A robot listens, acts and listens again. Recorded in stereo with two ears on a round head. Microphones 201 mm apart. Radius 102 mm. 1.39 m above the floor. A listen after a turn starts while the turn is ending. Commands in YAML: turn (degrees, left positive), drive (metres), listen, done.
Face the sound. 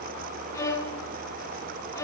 turn: 15
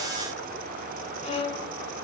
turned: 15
turn: 150
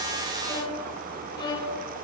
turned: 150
turn: 20
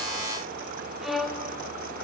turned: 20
done: "Facing the violin."